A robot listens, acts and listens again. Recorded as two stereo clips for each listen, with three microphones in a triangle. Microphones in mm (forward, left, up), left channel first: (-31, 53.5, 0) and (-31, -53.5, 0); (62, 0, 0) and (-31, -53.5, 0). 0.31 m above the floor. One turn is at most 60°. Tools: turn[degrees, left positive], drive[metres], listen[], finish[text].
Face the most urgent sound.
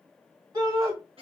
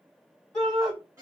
Thought: The shout: 55° right.
Action: turn[-55]
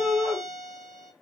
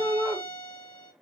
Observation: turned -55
Thought: The shout is now 10° right.
Action: turn[-10]
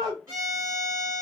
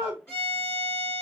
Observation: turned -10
Action: finish[Facing the shout.]